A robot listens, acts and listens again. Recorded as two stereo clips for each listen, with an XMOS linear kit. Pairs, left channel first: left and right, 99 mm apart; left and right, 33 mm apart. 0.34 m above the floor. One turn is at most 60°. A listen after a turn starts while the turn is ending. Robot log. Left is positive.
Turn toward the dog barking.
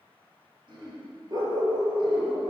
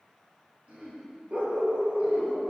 note: The dog barking: about 65° right or 115° right.
cmd yaw -60
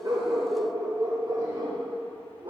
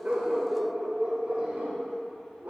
note: So it is at 65° right.
cmd yaw -60
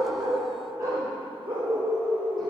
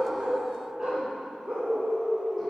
note: The dog barking is now 35° right.
cmd yaw -35
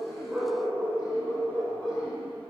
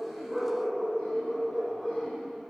note: The dog barking is now 10° left.
cmd yaw +10
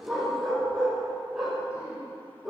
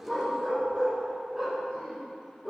end: Found it: a dog barking, straight ahead, 2 to 4 m away.